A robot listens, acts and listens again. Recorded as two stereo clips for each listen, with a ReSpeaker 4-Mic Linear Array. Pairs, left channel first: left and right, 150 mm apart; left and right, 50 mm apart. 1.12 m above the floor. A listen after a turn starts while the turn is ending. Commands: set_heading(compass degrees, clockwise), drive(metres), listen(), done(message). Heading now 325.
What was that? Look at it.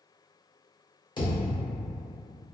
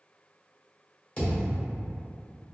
set_heading(295)
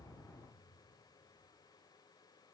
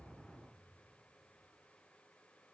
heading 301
listen()
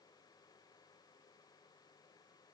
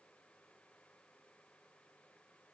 done("I heard a thud, but can't make it out now. It was about 5° left or 125° left.")